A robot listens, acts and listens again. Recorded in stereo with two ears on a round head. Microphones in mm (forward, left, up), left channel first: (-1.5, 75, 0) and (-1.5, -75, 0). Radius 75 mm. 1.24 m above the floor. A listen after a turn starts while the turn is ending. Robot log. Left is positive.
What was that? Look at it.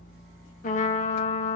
note: The trumpet: about 50° left or 130° left.
cmd yaw +50
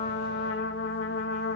note: So it is at 80° left.
cmd yaw +80
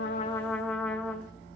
end: Found it: a trumpet, straight ahead, 1 to 2 m away.